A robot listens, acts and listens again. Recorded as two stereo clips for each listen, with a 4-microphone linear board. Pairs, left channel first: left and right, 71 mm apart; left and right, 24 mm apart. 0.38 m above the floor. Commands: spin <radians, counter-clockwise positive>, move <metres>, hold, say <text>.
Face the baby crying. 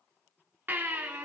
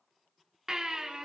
spin -0.52
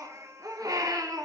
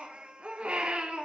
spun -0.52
spin -2.09
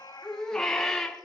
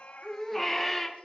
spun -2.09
spin 0.17
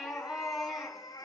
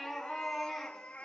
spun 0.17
say Found it: a baby crying, straight ahead, 2 to 4 m away.